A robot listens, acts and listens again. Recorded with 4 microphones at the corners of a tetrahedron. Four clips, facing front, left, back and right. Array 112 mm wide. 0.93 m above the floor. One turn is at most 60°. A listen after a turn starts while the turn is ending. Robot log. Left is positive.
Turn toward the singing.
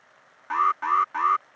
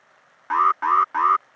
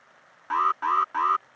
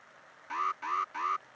cmd idle
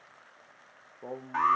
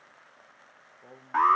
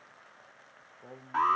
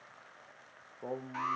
note: The singing: 45° right.
cmd yaw -45
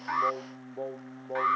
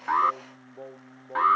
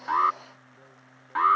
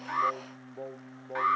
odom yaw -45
note: The singing is now 10° right.
cmd yaw -10
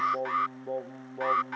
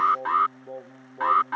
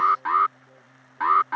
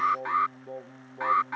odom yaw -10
end: Found it: singing, straight ahead.